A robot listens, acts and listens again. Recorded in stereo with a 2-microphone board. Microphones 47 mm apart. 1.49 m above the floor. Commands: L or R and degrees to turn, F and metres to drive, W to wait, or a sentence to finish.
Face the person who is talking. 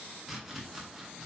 W
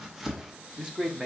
R20
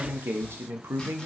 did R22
R105
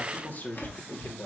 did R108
L50
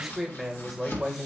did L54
Found it: a man speaking, straight ahead.